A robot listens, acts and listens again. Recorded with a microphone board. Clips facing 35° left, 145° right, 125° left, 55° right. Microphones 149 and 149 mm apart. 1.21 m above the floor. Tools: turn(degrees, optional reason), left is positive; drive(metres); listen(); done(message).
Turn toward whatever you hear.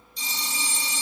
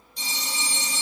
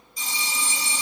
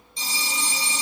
turn(degrees=-120, reason="The phone ringing: 120° right.")
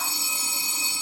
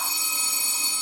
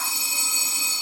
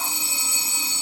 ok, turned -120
turn(degrees=-20, reason="The phone ringing is now 20° right.")
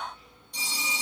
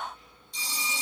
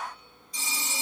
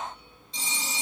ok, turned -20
done("Facing the phone ringing.")